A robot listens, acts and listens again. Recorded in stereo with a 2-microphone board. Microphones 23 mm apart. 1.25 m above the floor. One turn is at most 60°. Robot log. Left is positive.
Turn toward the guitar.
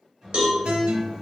note: The guitar: about 60° right or 120° right.
cmd yaw -60
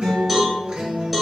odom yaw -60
note: So it is at 55° right.
cmd yaw -55
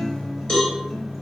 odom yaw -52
end: Facing the guitar, under 1 m away.